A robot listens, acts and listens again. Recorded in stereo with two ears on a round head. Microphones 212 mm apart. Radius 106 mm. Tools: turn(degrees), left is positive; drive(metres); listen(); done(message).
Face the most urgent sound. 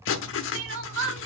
turn(degrees=-55)
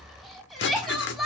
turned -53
done("Found it: crying, straight ahead.")